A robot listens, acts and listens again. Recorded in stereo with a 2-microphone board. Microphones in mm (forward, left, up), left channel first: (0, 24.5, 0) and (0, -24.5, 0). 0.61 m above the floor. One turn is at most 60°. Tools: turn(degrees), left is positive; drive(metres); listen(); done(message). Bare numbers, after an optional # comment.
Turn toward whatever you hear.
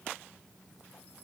listen()
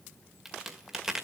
turn(-30)
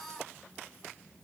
listen()
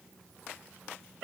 done("I heard a crack, but can't make it out now. It was about 25° left or 145° right.")